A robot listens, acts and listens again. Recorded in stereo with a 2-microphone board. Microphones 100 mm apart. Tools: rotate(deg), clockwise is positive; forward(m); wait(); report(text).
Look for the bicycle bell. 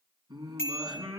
rotate(-25)
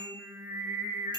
wait()
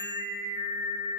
wait()
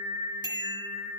rotate(-130)
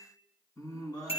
rotate(-75)
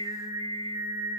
wait()
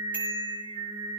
wait()
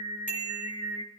rotate(15)
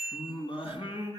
report("Facing the bicycle bell, over 4 m away.")